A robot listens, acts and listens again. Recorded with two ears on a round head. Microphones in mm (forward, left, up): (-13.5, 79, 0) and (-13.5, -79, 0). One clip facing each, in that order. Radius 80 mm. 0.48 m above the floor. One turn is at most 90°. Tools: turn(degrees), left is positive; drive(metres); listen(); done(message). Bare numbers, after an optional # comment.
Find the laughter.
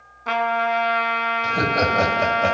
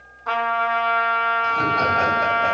# The laughter: about 50° left or 130° left.
turn(50)
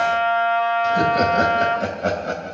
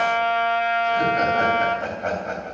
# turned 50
# So it is at 40° left.
turn(40)
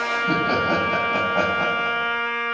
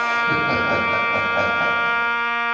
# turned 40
listen()
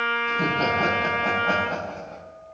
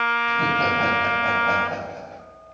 done("Facing the laughter, 2 to 4 m away.")